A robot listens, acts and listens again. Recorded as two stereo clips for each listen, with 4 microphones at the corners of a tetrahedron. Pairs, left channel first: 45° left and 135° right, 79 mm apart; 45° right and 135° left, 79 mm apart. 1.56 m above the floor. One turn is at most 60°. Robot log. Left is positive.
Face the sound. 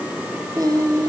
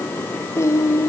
note: The singing: 100° right.
cmd yaw -60
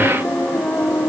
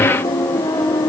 note: The singing is now 25° right.
cmd yaw -25
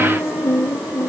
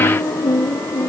note: The singing is now 15° right.
cmd yaw -15
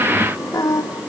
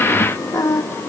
end: Found it: singing, straight ahead, 2 to 4 m away.